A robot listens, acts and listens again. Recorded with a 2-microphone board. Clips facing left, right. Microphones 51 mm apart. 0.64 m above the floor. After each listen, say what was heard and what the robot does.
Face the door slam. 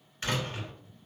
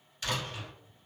The door slam: about 40° left or 140° left. Turn 40° left.
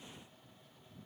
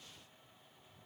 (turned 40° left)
Keep listening.
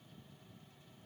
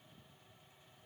I heard a door slam, but can't make it out now. It was about straight ahead or 100° left.